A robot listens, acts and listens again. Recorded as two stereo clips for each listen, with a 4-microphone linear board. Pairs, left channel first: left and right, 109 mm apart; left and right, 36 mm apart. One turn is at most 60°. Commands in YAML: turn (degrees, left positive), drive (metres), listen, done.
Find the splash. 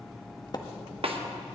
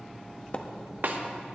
turn: 40
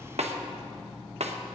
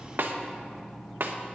listen: true
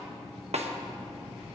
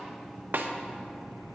done: "I heard a splash, but can't make it out now. It was about straight ahead or 100° left."